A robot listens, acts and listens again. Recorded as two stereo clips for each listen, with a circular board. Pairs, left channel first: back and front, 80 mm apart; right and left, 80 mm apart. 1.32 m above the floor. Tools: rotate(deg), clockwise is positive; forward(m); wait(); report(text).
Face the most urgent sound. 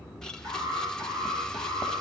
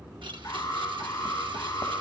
rotate(45)
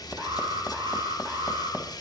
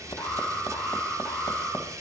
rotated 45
report("Facing the alarm.")